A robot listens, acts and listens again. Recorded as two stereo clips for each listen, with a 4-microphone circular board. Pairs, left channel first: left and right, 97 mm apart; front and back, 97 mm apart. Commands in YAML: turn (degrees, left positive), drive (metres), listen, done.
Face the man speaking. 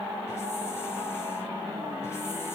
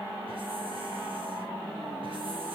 listen: true
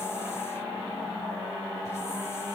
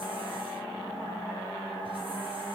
listen: true
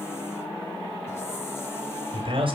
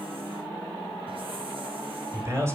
turn: -120
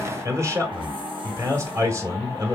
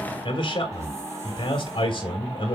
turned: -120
turn: -35
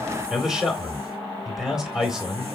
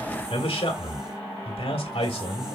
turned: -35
done: "Found it: a man speaking, straight ahead."